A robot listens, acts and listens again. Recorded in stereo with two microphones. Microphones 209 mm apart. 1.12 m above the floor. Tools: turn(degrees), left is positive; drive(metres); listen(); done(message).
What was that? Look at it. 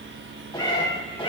turn(degrees=25)
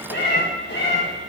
turn(degrees=125)
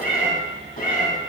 turn(degrees=40)
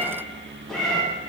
done("Found it: a cat meowing, straight ahead.")